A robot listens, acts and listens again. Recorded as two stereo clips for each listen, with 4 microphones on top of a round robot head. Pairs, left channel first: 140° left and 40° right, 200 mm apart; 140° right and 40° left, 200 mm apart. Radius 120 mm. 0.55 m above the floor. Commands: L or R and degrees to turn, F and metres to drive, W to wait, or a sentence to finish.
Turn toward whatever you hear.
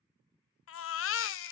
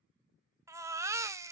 L115
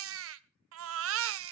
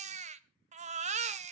R20
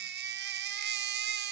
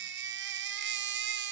Facing the baby crying.